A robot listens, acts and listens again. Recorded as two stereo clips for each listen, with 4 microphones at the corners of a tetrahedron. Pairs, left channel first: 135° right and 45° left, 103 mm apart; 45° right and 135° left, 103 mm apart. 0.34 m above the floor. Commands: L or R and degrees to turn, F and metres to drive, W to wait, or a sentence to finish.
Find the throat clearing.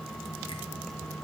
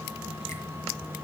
W
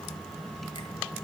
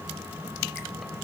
W
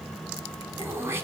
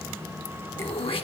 R20
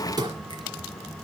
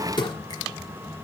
Facing the throat clearing, 1 to 2 m away.